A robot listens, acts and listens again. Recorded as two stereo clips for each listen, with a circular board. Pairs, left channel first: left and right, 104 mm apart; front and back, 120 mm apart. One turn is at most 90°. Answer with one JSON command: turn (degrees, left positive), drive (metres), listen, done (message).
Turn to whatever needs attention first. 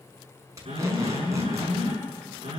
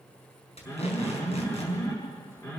{"turn": -65}
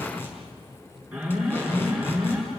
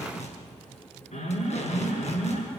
{"turn": -10}
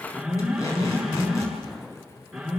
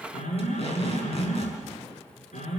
{"done": "Found it: an alarm, straight ahead."}